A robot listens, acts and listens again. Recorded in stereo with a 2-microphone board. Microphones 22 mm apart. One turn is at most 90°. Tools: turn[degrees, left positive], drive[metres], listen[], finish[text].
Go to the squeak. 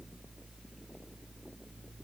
Action: listen[]
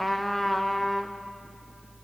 Action: listen[]
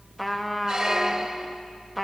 Thought: The squeak: about 35° right or 145° right.
Action: turn[-35]
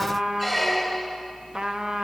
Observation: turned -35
Action: drive[1.0]
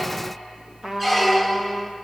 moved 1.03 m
Action: drive[1.0]
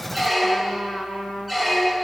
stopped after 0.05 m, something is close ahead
Thought: The squeak is now 10° right.
Action: turn[-10]
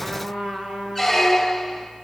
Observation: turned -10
Action: finish[I am next to the squeak.]